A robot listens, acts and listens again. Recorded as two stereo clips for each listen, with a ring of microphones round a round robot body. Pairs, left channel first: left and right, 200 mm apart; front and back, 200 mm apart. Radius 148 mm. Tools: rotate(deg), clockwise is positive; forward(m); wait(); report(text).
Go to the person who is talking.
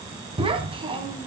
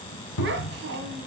rotate(150)
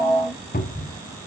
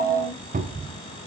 wait()
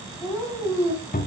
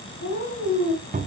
forward(1.0)
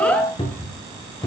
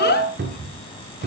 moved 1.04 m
forward(1.0)
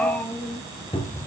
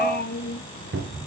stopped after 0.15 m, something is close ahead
rotate(-10)
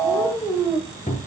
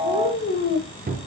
report("I am next to the child speaking.")